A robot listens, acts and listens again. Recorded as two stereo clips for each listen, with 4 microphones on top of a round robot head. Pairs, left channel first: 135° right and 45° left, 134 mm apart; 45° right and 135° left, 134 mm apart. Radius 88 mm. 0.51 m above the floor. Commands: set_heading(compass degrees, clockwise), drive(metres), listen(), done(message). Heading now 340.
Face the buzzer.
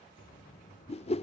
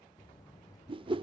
set_heading(85)
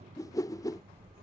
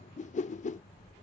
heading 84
done("Found it: a buzzer, straight ahead.")